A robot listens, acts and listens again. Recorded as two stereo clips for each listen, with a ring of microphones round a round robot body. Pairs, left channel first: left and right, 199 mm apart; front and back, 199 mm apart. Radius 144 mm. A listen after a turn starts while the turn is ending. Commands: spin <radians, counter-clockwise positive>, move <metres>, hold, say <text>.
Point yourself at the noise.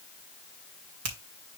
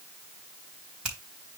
spin -1.66
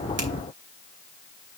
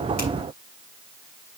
hold
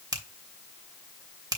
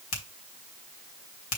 spin -0.26
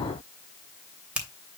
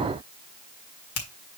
say Found it: a finger snap, straight ahead, 2 to 4 m away.